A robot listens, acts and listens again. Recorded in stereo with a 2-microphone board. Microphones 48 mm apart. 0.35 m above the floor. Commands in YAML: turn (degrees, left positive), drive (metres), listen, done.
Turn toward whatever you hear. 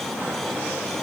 listen: true
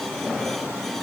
listen: true
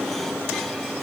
done: "I can't make out anything to turn to."